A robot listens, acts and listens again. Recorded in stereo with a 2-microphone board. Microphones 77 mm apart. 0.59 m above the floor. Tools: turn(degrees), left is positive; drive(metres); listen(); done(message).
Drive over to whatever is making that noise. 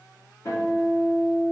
turn(degrees=45)
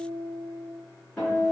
turn(degrees=10)
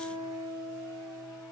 drive(metres=1.0)
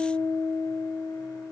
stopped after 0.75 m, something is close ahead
done("I am next to the guitar.")